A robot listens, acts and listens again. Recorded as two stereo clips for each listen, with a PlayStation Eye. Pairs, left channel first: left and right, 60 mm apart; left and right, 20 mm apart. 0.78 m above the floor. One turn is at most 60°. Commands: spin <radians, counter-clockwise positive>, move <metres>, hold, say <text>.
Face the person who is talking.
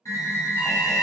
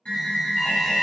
hold
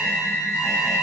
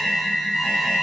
hold
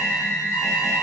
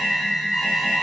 say I can't make out anyone speaking, only an alarm.